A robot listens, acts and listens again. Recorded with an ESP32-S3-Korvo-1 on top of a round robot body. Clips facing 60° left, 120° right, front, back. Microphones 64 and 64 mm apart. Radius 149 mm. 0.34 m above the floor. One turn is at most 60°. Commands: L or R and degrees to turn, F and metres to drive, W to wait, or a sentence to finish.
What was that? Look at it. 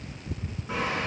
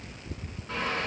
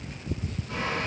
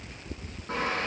L60
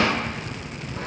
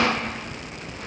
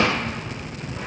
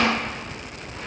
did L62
L60
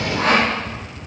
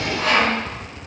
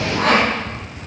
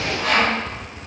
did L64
L10
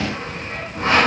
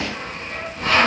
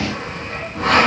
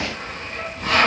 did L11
Found it: sawing, straight ahead.